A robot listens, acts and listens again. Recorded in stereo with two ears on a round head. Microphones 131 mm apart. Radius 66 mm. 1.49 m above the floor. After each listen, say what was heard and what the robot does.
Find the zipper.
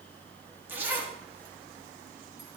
Turn 30° right.
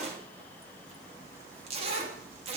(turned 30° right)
So it is at 135° right. Turn 135° right.
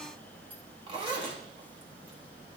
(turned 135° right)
The zipper is now 30° right. Turn 30° right.
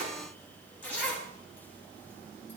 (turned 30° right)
The zipper is now 10° left. Turn 10° left.
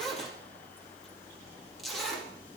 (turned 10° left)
Facing the zipper.